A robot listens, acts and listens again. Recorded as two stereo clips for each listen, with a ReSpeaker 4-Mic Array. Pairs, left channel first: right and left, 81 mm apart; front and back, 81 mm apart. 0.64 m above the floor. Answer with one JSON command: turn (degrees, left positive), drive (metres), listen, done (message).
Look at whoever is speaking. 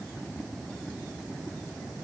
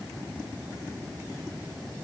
{"listen": true}
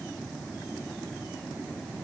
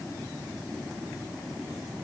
{"listen": true}
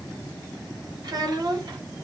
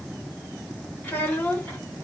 {"turn": 70}
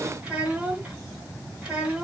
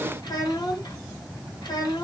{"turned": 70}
{"turn": 20}
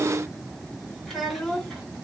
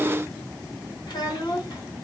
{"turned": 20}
{"done": "Facing the child speaking."}